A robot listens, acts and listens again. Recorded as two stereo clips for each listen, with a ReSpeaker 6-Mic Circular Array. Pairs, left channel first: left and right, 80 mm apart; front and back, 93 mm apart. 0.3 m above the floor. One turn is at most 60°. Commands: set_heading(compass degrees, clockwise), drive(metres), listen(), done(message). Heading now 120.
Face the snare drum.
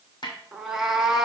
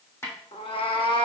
set_heading(60)
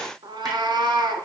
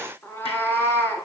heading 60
listen()
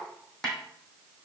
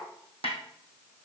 set_heading(50)
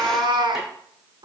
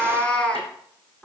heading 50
listen()
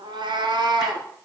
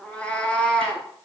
listen()
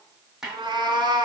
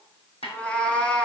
done("Found it: a snare drum, straight ahead, 2 to 4 m away.")